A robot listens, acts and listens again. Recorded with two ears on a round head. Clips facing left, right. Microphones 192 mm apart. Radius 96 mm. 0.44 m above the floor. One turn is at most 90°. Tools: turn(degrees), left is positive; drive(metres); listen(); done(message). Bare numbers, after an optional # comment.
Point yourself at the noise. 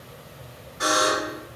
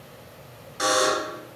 turn(-90)
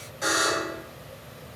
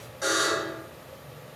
done("Facing the buzzer, 1 to 2 m away.")